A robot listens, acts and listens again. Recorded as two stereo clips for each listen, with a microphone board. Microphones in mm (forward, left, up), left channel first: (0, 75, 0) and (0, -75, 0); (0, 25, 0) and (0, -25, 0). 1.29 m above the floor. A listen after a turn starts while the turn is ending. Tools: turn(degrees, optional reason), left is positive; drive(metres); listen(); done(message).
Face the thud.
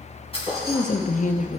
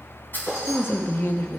turn(degrees=40, reason="The thud: about 40° left or 140° left.")
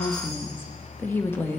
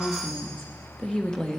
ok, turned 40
listen()
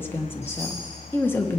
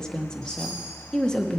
done("I heard a thud, but can't make it out now. It was about straight ahead or 100° left.")